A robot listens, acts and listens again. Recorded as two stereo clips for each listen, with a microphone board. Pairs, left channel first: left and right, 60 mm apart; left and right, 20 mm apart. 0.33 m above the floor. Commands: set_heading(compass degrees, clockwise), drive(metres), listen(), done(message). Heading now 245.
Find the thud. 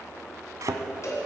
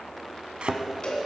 set_heading(315)
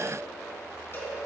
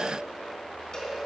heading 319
listen()
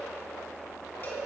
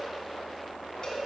done("I heard a thud, but can't make it out now. It was about 5° left or 35° right.")